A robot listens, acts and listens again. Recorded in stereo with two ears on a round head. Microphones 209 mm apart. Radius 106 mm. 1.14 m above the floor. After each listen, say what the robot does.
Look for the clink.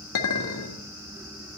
Turn 60° left.
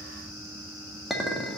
Found it: a clink, straight ahead.